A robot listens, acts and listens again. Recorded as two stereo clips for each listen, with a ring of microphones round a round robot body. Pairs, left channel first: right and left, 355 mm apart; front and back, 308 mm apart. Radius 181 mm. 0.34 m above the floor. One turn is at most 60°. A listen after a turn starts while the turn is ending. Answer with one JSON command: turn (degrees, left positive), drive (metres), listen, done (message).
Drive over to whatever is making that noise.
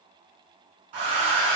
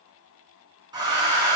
{"turn": 60}
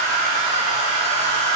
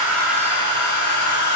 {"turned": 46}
{"turn": 55}
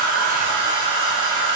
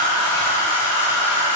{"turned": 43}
{"turn": 15}
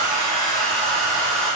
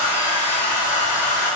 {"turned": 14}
{"drive": 1.0}
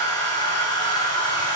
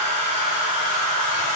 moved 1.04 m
{"turn": -10}
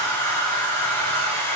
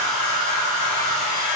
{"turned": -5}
{"drive": 1.0}
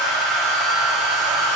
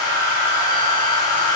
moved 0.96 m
{"drive": 1.0}
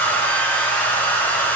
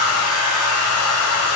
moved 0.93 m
{"drive": 1.0}
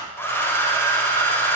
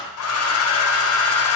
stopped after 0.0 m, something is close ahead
{"turn": -10}
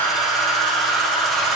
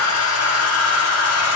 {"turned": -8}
{"done": "Arrived at the hair dryer, straight ahead."}